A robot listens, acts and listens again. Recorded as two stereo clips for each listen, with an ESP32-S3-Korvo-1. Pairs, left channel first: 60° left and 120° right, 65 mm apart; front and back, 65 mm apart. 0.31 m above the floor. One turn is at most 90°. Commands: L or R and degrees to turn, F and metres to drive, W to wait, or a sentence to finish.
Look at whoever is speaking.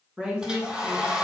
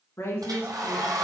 R50
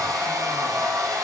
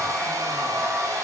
W
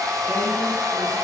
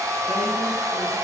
W
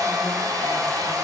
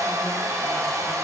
I heard a woman speaking from this way, but can't make it out now.